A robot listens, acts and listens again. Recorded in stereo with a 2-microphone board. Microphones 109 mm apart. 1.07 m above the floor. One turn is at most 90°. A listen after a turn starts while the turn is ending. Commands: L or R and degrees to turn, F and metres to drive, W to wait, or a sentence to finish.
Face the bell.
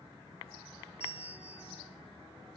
L65
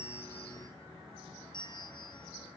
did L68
L45
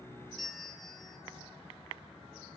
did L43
Found it: a bell, straight ahead, 2 to 4 m away.